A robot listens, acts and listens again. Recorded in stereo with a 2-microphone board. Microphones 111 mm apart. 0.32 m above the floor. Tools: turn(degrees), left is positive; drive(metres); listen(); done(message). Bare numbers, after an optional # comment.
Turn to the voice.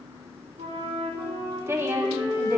# The woman speaking: about 25° right or 155° right.
turn(-25)
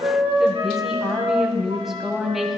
done("Facing the woman speaking.")